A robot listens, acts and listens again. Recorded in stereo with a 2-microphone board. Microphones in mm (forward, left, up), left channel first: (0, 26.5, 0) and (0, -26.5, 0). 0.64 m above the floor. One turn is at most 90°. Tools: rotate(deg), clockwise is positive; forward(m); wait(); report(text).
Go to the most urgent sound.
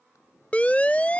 rotate(-30)
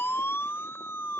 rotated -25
rotate(-90)
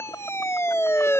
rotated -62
rotate(-60)
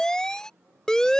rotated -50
rotate(-10)
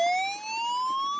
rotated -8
forward(1.0)
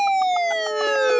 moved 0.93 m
forward(1.0)
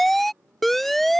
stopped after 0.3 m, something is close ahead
report("Arrived at the siren, straight ahead.")